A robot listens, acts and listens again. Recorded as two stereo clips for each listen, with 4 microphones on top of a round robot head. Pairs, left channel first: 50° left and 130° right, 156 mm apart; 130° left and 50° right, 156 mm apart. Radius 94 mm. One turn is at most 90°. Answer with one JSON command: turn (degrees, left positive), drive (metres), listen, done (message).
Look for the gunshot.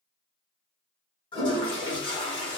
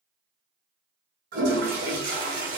{"listen": true}
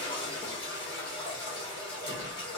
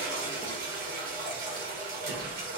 {"listen": true}
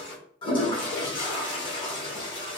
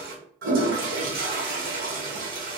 {"done": "I can't make out a gunshot, only a toilet flushing."}